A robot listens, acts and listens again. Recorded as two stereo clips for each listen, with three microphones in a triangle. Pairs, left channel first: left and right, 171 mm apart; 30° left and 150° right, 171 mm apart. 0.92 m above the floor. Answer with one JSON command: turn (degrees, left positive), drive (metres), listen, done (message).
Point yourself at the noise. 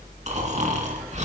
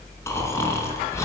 {"turn": -45}
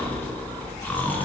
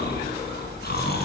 {"turn": 10}
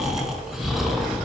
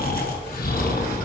{"done": "Facing the snoring, 2 to 4 m away."}